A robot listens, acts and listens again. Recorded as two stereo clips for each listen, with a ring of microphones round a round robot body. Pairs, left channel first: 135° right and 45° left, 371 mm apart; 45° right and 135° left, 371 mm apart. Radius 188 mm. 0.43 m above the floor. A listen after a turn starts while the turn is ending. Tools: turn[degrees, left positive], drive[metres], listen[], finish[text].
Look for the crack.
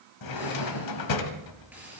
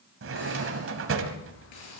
Action: listen[]
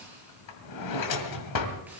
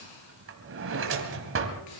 Action: listen[]
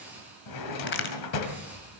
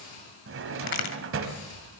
Thought: The crack: 75° right.
Action: turn[-75]
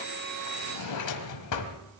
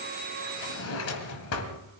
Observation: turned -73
Action: finish[I heard a crack from this way, but can't make it out now.]